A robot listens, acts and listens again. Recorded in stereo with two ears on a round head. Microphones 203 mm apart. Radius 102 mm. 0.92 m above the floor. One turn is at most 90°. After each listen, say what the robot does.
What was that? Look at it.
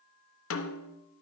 Turn 60° left.
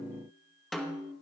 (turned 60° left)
Found it: a snare drum, straight ahead.